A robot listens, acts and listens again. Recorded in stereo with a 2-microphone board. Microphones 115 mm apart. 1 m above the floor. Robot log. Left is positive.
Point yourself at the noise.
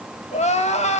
note: The crying: about 70° left or 110° left.
cmd yaw +70
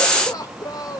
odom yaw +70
note: So it is at 30° left.
cmd yaw +30
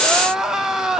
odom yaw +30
end: Facing the crying, 1 to 2 m away.